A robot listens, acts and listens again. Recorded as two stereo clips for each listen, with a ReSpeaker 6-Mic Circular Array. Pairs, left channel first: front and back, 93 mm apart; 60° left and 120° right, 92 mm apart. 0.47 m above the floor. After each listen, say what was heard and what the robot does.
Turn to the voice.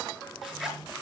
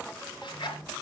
Keep listening.
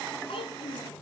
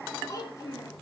The child speaking: 10° left. Turn 10° left.
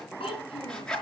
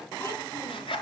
Keep listening.
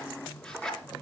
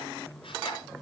Keep listening.
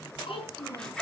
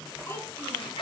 Facing the child speaking.